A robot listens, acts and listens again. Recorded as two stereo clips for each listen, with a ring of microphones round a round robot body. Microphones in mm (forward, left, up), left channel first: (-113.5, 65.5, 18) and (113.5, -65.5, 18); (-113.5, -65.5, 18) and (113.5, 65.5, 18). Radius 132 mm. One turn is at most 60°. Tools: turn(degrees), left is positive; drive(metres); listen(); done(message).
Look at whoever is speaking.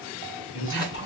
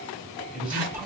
turn(degrees=60)
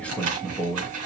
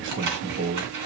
turn(degrees=60)
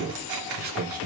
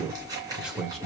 turn(degrees=-60)
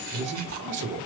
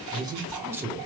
turn(degrees=-50)
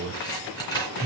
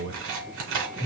done("Found it: a man speaking, straight ahead, 1 to 2 m away.")